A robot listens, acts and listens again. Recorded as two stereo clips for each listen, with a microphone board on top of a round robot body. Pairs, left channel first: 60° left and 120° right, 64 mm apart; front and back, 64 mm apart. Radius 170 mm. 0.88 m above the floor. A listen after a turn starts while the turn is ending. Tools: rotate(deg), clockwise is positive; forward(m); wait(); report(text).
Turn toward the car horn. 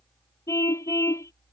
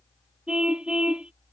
rotate(-105)
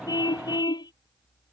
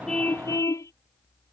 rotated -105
rotate(-45)
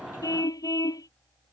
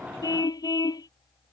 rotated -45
rotate(-25)
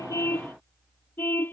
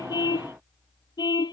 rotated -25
report("Found it: a car horn, straight ahead.")